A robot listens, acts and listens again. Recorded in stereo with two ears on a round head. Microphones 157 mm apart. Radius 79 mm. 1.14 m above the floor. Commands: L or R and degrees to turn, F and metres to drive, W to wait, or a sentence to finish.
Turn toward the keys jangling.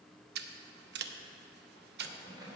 R25
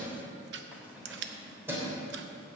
R15
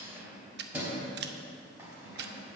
R15
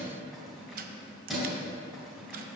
L30
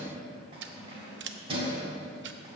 R35
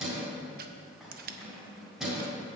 Facing the keys jangling, 2 to 4 m away.